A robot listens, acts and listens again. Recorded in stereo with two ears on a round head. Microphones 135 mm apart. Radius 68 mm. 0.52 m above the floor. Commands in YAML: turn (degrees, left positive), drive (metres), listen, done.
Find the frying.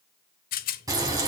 turn: -25
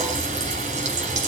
turn: -130
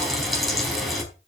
done: "Facing the frying, over 4 m away."